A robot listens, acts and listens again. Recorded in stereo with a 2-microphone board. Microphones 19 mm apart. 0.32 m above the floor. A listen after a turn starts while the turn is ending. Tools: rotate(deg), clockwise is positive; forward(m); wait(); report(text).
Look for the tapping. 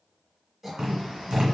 rotate(60)
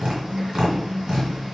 rotate(50)
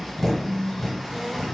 rotate(-25)
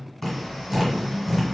report("Facing the tapping, 1 to 2 m away.")